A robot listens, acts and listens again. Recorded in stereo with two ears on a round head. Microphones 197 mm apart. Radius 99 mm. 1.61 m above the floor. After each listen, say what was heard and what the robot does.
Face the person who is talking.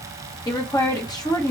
The woman speaking: about 15° left or 165° left. Turn 15° left.
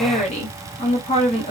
So it is at 150° left. Turn 150° left.
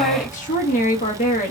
The woman speaking is now 40° left. Turn 40° left.
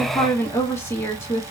The woman speaking is now 15° left. Turn 15° left.
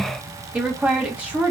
Facing the woman speaking, 1 to 2 m away.